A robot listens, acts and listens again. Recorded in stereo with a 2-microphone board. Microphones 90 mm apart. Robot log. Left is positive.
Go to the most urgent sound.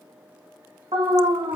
cmd yaw -90
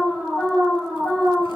cmd fwd 1.0
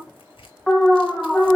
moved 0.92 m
cmd fwd 1.0
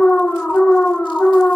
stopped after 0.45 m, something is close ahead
note: The alarm is now 15° left.
cmd yaw +15
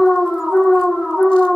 end: Arrived at the alarm, straight ahead.